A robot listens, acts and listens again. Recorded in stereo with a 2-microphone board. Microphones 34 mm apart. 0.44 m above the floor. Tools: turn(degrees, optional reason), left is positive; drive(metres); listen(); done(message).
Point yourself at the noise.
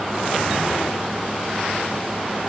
listen()
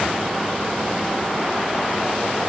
listen()
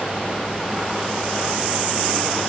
done("I can't make out anything to turn to.")